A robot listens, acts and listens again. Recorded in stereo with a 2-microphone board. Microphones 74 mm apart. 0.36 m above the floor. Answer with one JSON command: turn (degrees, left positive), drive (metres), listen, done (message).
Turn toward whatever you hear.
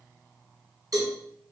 {"turn": -55}
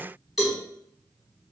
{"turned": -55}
{"done": "Facing the cowbell."}